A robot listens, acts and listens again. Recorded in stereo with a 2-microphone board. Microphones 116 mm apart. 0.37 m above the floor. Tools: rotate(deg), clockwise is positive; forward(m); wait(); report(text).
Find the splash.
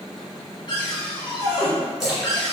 rotate(30)
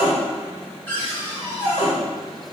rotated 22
wait()
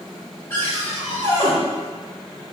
report("I heard a splash, but can't make it out now. It was about 20° left or 155° right.")